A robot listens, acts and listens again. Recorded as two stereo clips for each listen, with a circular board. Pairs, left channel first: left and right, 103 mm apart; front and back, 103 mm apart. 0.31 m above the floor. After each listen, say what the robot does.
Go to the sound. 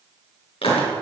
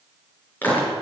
Turn 70° left.
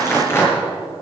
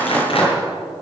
Turn 25° left.
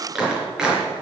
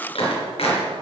Turn 10° right.
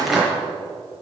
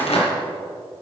Drive 1.0 m forward.
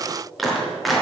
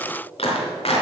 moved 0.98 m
Drive 1.0 m forward.
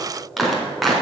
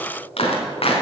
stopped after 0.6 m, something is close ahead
Something is in my way. I am facing the clap but have not reached it.